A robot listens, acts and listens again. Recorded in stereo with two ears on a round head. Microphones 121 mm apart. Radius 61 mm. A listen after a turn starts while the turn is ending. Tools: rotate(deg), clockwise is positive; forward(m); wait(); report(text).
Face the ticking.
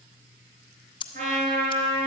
rotate(-40)
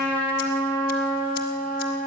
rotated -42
wait()
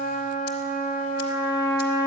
wait()
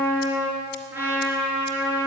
report("I heard ticking, but can't make it out now. It was about 5° right or 100° left.")